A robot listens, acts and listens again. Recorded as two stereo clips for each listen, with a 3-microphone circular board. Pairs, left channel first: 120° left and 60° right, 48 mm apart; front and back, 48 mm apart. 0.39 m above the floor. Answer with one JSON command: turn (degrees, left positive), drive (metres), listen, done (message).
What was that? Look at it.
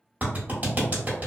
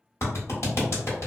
{"turn": -10}
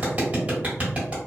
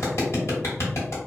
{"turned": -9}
{"done": "Facing the clap."}